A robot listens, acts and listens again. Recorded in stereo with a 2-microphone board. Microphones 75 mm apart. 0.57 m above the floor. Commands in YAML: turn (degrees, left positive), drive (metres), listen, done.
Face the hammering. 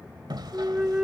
turn: -90
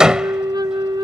turn: -10
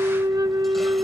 listen: true
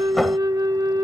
listen: true
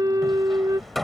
done: "Facing the hammering."